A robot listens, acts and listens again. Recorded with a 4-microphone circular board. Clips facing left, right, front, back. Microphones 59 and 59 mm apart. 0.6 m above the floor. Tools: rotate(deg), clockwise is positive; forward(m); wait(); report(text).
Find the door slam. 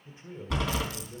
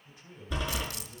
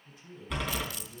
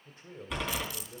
rotate(-90)
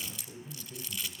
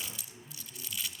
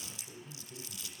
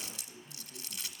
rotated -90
report("I heard a door slam from this way, but can't make it out now.")